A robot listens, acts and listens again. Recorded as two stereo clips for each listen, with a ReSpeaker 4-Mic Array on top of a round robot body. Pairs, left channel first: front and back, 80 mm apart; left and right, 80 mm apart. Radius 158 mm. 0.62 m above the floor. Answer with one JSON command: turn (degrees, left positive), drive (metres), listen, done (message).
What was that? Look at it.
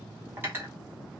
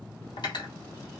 {"turn": 115}
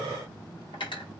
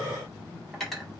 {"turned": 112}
{"done": "Facing the cutlery clinking."}